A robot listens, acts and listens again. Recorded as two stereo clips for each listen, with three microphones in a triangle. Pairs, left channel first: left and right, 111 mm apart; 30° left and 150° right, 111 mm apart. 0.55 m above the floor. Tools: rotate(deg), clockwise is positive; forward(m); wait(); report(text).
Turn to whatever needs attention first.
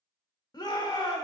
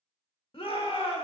rotate(-50)
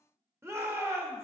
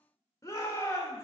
rotate(25)
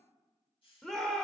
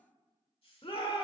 report("Found it: a shout, straight ahead.")